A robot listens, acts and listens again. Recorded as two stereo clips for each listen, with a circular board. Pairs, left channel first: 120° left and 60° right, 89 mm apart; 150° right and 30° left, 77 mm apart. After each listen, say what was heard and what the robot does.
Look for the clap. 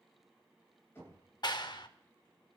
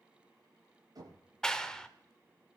The clap: 130° left. Turn 130° left.
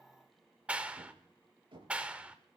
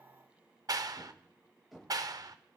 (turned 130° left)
The clap is now 10° left. Turn 10° left.
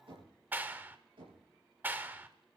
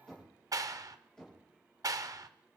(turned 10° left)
Found it: a clap, straight ahead, under 1 m away.